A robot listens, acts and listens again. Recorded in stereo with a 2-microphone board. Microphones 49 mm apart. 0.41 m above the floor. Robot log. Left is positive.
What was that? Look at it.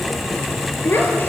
note: The child speaking: about 45° left or 135° left.
cmd yaw +45
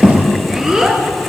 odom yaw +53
note: So it is at 10° right.
cmd yaw -10
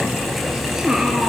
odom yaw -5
note: The child speaking is now 15° right.
cmd yaw -15
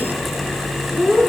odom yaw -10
note: The child speaking is now 10° right.
cmd yaw -10
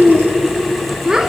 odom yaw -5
note: The child speaking is now 15° right.
cmd yaw -15
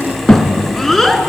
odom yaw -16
end: Facing the child speaking, 2 to 4 m away.